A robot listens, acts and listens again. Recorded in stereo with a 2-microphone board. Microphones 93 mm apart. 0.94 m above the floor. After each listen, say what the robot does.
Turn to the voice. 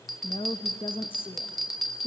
Turn 70° left.
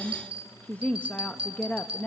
Turn 15° left.
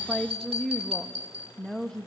Facing the woman speaking.